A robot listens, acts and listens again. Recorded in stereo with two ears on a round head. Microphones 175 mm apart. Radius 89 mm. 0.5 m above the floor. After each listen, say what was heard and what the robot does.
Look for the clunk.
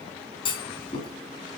The clunk: about 25° left or 155° left. Turn 25° left.
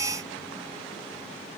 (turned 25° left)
Keep listening.
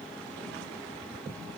I heard a clunk, but can't make it out now. It was about straight ahead or 130° left.